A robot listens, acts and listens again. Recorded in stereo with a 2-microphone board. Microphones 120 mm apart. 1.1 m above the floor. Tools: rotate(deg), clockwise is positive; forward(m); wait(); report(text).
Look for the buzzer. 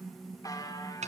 rotate(-30)
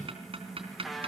report("Facing the buzzer, 2 to 4 m away.")